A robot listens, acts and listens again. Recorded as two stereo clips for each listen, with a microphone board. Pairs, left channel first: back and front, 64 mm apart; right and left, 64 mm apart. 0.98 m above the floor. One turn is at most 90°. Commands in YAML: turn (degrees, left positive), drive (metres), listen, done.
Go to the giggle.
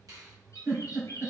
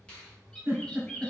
turn: 30
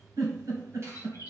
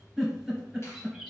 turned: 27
drive: 1.0
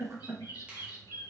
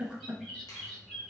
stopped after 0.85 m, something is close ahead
turn: 15
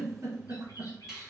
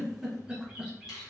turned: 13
done: "Arrived at the giggle, straight ahead."